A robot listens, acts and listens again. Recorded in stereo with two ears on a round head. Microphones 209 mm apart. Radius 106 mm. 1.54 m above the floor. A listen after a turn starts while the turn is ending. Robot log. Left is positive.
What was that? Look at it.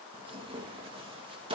note: The tearing paper: about 25° right or 155° right.
cmd yaw -25
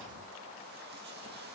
cmd idle
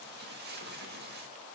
note: So it is at 135° right.
cmd yaw -135
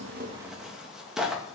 end: Facing the tearing paper.